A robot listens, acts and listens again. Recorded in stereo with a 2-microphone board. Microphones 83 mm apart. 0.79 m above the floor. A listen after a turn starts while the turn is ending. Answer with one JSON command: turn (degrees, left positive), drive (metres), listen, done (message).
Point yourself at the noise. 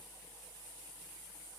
{"listen": true}
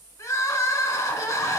{"turn": 40}
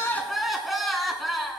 {"done": "Found it: crying, straight ahead."}